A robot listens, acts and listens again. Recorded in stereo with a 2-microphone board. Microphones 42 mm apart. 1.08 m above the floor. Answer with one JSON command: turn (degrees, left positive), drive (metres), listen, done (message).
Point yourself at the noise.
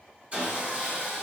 {"turn": -30}
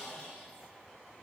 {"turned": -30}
{"done": "Facing the sawing."}